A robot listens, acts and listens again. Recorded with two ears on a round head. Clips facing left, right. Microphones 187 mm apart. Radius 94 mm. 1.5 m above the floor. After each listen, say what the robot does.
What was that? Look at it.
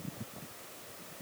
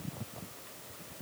Keep listening.
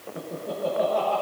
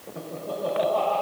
Turn 20° left.
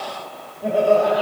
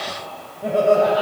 Facing the laughter.